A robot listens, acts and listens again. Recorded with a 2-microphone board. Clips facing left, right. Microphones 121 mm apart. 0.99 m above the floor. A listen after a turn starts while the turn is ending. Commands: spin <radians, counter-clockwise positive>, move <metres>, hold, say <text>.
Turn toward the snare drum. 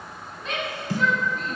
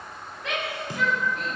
spin -0.35
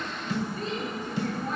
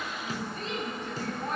spin -2.44
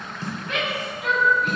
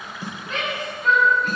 hold
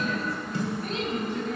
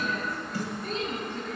spin 0.44
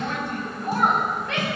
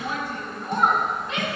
hold
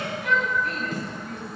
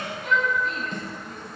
say Found it: a snare drum, straight ahead.